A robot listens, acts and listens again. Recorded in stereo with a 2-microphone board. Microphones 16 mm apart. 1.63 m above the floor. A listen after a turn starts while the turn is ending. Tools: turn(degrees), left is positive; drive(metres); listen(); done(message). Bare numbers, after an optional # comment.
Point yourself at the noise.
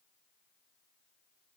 listen()
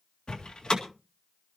# The door slam: about 70° left or 110° left.
turn(70)
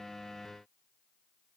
listen()
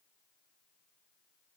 done("I heard a door slam, but can't make it out now. It was about straight ahead or 40° left.")